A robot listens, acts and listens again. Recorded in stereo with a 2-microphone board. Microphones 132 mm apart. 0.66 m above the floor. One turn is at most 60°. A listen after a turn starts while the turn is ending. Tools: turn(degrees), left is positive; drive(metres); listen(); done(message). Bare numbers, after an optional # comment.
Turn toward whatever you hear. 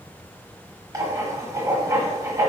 # The writing: about 25° right or 155° right.
turn(-25)
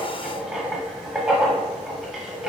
# So it is at 10° right.
turn(-10)
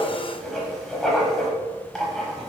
done("Found it: writing, straight ahead, under 1 m away.")